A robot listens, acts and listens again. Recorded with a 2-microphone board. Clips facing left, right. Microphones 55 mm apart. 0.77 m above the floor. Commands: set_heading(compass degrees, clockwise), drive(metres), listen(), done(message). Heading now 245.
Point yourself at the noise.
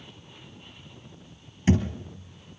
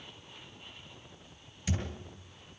set_heading(210)
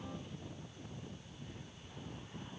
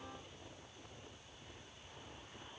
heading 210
listen()
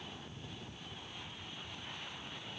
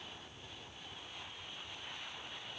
done("I heard a thud, but can't make it out now. It was about straight ahead or 110° left.")